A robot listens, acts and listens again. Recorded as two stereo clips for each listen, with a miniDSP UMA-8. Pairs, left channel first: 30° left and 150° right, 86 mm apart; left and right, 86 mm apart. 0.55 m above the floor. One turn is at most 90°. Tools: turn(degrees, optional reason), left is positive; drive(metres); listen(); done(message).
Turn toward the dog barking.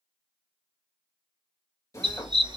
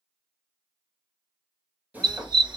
turn(degrees=-90, reason="The dog barking: 120° right.")
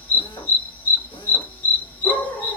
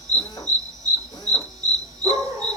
turn(degrees=-40, reason="The dog barking is now 40° right.")
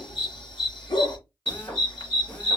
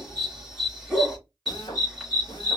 done("Found it: a dog barking, straight ahead.")